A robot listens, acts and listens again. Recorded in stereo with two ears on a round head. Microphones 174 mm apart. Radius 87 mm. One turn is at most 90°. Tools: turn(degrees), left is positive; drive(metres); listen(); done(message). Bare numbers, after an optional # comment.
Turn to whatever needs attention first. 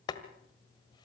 listen()
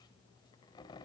listen()
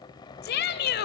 # The shout: about 55° left or 125° left.
turn(55)
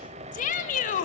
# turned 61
# So it is at 45° left.
turn(45)
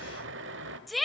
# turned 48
done("Found it: a shout, straight ahead.")